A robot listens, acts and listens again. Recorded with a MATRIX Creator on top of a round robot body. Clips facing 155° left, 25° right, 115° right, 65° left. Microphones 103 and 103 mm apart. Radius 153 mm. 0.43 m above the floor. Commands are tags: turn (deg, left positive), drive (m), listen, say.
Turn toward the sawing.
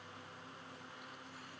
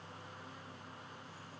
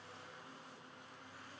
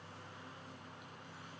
<listen/>
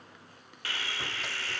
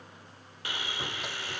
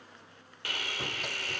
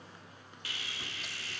<turn deg="-95"/>
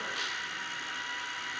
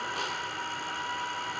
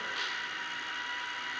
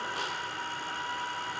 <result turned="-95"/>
<turn deg="20"/>
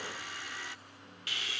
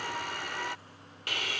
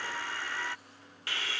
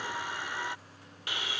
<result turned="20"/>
<say>Found it: sawing, straight ahead.</say>